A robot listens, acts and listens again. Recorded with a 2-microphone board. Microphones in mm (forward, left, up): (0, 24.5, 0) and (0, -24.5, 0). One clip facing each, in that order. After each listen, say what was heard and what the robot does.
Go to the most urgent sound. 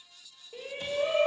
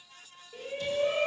The shout: about 20° left or 160° left. Turn 20° left.
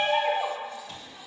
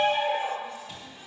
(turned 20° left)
So it is at 140° left. Turn 140° left.
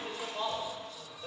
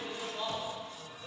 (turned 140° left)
The shout is now 25° left. Turn 25° left.
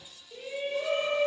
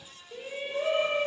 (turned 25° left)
The shout is now 15° right. Turn 15° right.
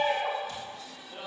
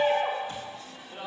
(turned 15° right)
Drive 1.0 m forward.
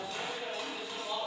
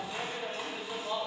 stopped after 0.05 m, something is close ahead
The shout is now 10° right. Turn 10° right.
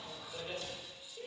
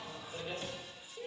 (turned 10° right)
Blocked. The shout is further on, straight ahead.